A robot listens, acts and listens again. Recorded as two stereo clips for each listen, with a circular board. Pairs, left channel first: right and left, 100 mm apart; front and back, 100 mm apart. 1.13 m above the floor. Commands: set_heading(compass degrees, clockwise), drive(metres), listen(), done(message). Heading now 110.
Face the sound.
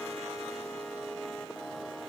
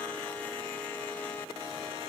listen()
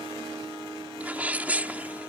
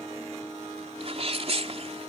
set_heading(305)
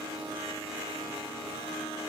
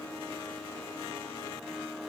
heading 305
done("I heard a sneeze from this way, but can't make it out now.")